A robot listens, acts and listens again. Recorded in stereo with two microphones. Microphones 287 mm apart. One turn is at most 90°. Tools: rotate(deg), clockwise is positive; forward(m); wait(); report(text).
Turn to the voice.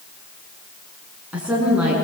rotate(30)
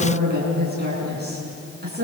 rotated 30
rotate(90)
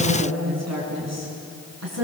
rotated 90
rotate(65)
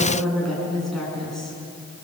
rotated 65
report("Found it: a woman speaking, straight ahead, over 4 m away.")